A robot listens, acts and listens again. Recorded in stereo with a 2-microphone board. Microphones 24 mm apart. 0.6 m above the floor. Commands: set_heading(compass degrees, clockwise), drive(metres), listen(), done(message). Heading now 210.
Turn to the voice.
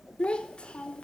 set_heading(155)
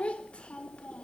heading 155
set_heading(95)
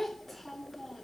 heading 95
done("Facing the child speaking.")